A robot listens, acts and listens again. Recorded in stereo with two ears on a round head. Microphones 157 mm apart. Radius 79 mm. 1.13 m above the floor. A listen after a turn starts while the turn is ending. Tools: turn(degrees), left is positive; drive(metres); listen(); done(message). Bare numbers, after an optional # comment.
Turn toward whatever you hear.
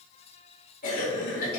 # The cough: about 55° left or 125° left.
turn(55)
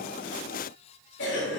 # So it is at 70° left.
turn(70)
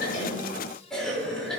done("Found it: a cough, straight ahead, 2 to 4 m away.")